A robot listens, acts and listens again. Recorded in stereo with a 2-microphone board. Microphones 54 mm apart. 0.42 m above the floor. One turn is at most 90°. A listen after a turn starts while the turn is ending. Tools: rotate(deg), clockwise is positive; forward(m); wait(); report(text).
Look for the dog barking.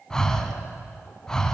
wait()
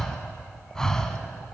wait()
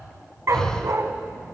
rotate(70)
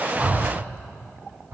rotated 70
wait()
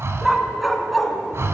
report("Found it: a dog barking, straight ahead, 1 to 2 m away.")